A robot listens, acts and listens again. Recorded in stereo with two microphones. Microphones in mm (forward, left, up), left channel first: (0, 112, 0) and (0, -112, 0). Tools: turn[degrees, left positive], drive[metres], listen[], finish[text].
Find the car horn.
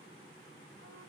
Action: listen[]
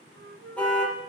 Action: turn[30]
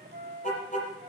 Thought: So it is at 145° left.
Action: turn[145]
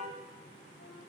Action: listen[]
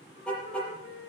Action: finish[Found it: a car horn, straight ahead, over 4 m away.]